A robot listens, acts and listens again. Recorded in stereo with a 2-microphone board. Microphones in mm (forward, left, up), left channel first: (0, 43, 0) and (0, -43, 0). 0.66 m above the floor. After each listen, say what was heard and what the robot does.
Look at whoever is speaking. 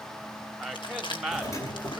Turn 30° left.
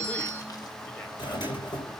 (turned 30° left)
Keep listening.
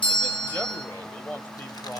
So it is at 150° left. Turn 150° left.
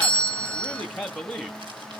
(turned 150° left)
Found it: a man speaking, straight ahead.